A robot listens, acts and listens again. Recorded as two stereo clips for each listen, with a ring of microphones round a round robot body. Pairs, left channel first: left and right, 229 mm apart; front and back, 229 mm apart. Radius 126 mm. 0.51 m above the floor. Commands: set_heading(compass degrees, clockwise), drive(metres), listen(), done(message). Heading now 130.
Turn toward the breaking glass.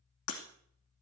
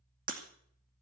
set_heading(5)
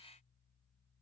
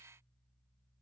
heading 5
done("I heard breaking glass from this way, but can't make it out now.")